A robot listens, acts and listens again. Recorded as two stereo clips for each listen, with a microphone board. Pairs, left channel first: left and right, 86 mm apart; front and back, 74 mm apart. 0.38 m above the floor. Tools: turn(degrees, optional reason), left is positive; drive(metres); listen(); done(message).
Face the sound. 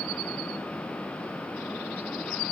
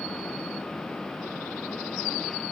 listen()
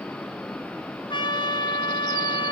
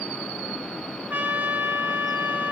turn(degrees=115, reason="The trumpet: 115° left.")
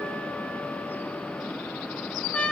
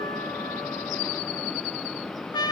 turn(degrees=15, reason="The trumpet is now 15° left.")
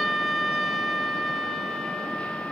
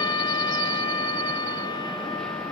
done("Facing the trumpet.")